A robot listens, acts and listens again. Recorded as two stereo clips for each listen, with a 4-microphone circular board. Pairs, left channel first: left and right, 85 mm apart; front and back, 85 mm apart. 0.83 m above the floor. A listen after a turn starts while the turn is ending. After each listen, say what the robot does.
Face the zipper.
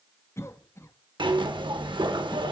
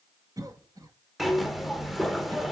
Turn 90° right.
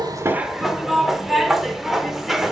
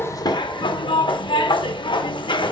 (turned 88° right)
Found it: a zipper, straight ahead.